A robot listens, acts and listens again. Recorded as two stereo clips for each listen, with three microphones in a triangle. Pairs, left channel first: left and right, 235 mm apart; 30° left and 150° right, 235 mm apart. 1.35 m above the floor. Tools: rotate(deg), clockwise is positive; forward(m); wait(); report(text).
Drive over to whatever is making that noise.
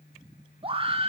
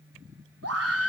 rotate(155)
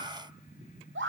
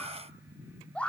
rotate(55)
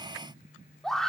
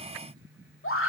forward(1.0)
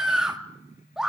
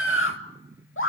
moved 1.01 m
forward(1.0)
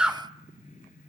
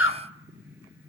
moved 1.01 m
forward(1.0)
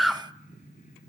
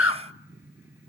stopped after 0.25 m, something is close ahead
report("Arrived at the scream, straight ahead.")